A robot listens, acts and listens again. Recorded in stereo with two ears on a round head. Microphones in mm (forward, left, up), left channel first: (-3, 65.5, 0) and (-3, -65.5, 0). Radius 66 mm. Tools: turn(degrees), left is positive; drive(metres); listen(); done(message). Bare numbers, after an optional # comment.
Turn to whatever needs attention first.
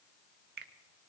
listen()
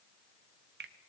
listen()
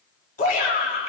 # The shout: about 60° left or 120° left.
turn(60)
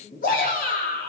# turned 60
# So it is at 60° left.
turn(60)
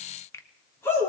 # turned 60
# The shout is now 20° left.
turn(20)
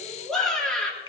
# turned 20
done("Found it: a shout, straight ahead, over 4 m away.")